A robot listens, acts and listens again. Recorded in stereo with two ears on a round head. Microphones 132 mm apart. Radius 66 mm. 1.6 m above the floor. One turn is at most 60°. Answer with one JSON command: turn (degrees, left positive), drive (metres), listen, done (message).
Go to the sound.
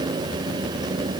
{"listen": true}
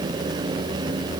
{"listen": true}
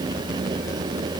{"done": "I can't make out anything."}